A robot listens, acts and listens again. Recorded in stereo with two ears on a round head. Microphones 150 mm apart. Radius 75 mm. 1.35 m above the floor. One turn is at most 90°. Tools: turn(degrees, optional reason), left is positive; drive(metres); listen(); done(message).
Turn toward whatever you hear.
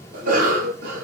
turn(degrees=-55, reason="The cough: about 55° right or 125° right.")
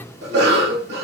turn(degrees=-65, reason="So it is at 65° right.")
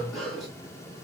done("Found it: a cough, straight ahead, 1 to 2 m away.")